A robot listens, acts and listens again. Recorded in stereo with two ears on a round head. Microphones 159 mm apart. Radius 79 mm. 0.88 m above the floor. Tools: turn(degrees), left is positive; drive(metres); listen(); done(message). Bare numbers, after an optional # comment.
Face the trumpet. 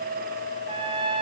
# The trumpet: about 30° right or 150° right.
turn(-30)
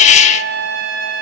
# So it is at 120° right.
turn(-120)
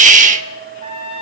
# The trumpet is now 35° right.
turn(-35)
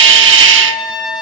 done("Facing the trumpet, over 4 m away.")